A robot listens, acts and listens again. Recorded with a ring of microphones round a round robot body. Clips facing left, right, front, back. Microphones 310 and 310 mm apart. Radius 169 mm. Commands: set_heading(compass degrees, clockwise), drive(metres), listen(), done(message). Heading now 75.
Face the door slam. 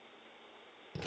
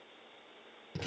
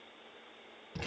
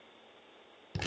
listen()
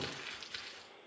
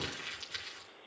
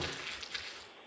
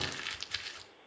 listen()
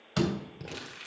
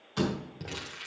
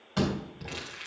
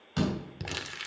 set_heading(330)
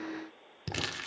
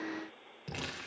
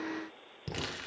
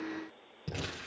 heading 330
done("I heard a door slam from this way, but can't make it out now.")